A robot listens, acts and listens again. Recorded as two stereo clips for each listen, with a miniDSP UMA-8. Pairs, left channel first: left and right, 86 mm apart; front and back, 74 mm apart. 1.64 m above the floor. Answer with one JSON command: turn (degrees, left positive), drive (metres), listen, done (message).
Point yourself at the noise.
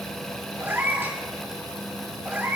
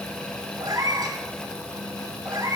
{"turn": -160}
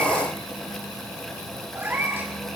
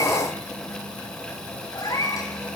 {"turn": -30}
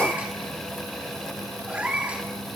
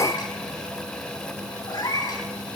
{"turn": -20}
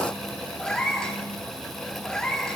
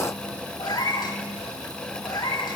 {"done": "Facing the cat meowing."}